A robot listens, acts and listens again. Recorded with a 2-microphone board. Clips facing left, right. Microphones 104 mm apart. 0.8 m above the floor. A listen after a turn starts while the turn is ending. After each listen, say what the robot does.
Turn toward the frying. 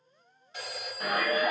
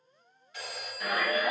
Keep listening.
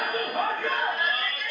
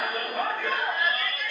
Keep listening.
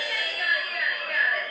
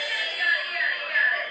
I can't make out frying to turn to.